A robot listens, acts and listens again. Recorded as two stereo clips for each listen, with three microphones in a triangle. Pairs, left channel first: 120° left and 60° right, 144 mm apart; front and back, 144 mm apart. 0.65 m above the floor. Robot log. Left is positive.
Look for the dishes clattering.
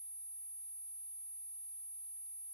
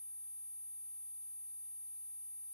cmd idle
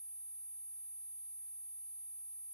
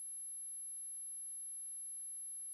cmd idle
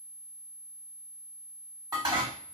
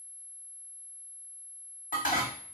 end: Found it: dishes clattering, straight ahead, 1 to 2 m away.